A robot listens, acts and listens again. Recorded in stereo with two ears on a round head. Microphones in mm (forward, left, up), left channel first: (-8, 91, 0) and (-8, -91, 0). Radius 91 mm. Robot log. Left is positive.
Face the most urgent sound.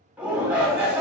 cmd yaw -30
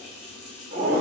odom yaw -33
note: So it is at 140° right.
cmd yaw -140
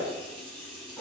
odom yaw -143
cmd idle
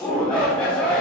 end: Found it: a shout, straight ahead, 1 to 2 m away.